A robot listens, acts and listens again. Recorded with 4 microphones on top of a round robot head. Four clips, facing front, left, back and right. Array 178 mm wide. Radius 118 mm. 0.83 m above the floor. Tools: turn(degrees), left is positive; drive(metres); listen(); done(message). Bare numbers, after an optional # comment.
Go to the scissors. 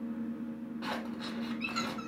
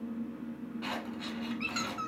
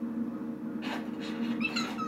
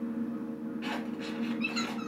# The scissors: 35° left.
turn(35)
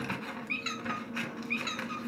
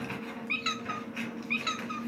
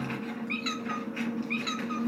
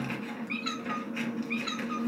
drive(1.0)
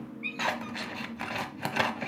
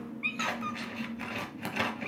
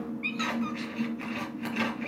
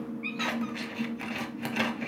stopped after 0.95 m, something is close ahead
done("I am next to the scissors.")